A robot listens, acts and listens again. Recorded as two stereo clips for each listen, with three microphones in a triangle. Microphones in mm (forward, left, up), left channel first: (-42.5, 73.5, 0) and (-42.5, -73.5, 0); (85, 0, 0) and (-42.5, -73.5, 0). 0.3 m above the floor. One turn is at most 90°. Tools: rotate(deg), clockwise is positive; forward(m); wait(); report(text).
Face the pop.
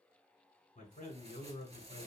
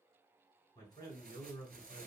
wait()
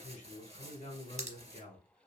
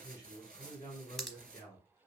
rotate(60)
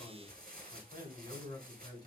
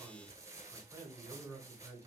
report("Facing where the pop came from. I can't hear it now.")